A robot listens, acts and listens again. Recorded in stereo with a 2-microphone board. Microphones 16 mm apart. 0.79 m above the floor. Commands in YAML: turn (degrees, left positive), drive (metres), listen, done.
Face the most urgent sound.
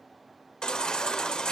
turn: 65
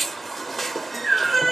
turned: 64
done: "Found it: a baby crying, straight ahead, 1 to 2 m away."